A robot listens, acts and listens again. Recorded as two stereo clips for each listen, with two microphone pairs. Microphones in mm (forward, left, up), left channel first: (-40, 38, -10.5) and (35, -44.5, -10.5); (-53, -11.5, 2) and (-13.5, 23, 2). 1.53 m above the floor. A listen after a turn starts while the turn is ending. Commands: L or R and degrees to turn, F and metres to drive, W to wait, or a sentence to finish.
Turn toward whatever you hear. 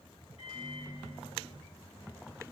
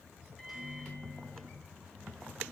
L130
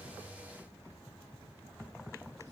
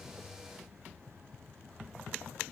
W
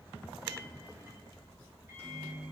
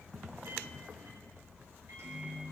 L20
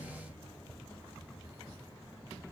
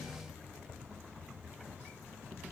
W
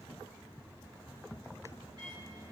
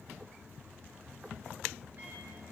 Found it: a microwave, straight ahead.